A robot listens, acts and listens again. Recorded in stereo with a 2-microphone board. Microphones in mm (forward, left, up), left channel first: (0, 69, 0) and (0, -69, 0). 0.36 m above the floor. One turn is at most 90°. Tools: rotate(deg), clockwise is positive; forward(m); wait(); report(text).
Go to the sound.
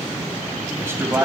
rotate(20)
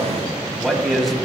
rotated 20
forward(1.0)
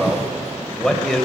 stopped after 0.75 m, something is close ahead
report("Arrived at the man speaking, straight ahead.")